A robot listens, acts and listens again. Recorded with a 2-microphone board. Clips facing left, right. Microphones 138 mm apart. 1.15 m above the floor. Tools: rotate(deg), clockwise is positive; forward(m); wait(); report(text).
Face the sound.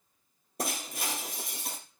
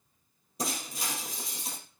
rotate(-65)
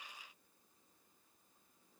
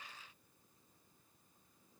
wait()
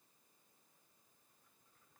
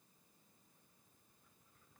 report("I heard breaking glass, but can't make it out now. It was about straight ahead or 50° left.")